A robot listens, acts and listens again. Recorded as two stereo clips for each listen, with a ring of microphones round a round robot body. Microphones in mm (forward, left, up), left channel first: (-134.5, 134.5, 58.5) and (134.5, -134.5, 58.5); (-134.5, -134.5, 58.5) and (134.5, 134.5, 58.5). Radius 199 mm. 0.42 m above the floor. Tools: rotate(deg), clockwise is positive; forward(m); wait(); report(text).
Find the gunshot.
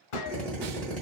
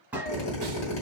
rotate(-130)
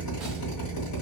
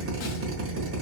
report("Facing where the gunshot came from. I can't hear it now.")